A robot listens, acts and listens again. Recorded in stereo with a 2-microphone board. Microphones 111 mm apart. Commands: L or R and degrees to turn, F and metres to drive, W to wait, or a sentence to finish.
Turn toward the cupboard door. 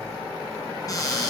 L35
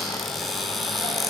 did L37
Facing the cupboard door, 2 to 4 m away.